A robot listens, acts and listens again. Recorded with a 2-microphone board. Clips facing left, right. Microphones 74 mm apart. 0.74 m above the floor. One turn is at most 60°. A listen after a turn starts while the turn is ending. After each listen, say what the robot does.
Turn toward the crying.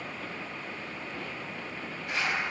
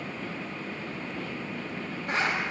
Keep listening.
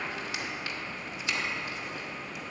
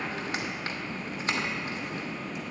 Keep listening.
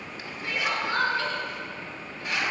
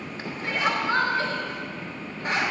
Turn 30° right.
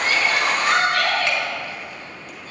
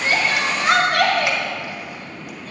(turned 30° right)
Turn 60° right.
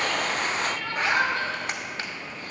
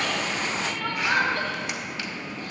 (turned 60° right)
Turn 60° right.
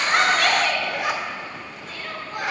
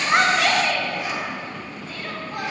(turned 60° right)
Found it: crying, straight ahead, 1 to 2 m away.